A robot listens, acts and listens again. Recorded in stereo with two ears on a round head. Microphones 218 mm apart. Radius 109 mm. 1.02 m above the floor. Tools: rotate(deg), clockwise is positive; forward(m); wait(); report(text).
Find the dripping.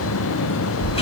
wait()
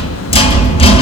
wait()
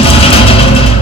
report("I can't make out dripping, only a rattle.")